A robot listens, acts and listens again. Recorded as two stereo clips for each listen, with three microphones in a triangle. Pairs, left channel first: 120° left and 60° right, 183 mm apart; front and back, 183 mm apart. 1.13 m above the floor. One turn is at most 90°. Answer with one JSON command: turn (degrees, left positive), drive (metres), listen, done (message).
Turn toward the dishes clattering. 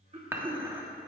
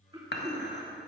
{"turn": 15}
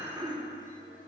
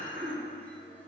{"done": "Facing the dishes clattering, 1 to 2 m away."}